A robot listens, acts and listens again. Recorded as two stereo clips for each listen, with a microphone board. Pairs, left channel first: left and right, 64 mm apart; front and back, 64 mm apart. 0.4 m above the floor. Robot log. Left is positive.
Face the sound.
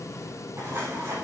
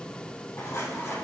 note: The dropped coin: 50° right.
cmd yaw -50
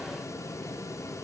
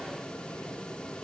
end: Facing where the dropped coin came from. I can't hear it now.